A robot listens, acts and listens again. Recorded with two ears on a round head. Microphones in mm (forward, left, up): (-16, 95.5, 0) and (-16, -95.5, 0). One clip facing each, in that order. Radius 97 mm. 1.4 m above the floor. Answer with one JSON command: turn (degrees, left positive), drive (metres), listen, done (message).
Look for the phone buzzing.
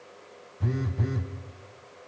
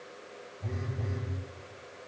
{"turn": 70}
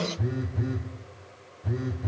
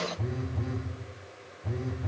{"turn": 15}
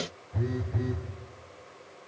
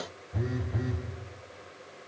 {"done": "Facing the phone buzzing."}